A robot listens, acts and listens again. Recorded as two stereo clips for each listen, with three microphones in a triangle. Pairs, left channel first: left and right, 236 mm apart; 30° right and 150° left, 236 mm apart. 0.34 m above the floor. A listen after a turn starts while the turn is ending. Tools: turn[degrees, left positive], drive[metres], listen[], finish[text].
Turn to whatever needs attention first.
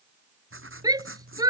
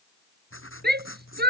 Thought: The shout: 165° right.
Action: turn[-165]
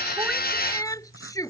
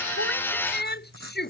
Thought: The shout is now 15° left.
Action: turn[15]
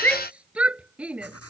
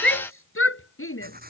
Action: finish[Facing the shout.]